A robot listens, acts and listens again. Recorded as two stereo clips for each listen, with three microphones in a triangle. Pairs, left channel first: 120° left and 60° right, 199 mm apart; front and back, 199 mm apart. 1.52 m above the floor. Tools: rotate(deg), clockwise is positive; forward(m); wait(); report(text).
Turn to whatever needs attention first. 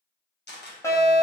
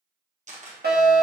rotate(170)
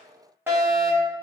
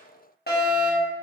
rotate(-15)
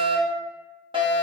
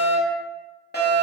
report("Facing the fire alarm.")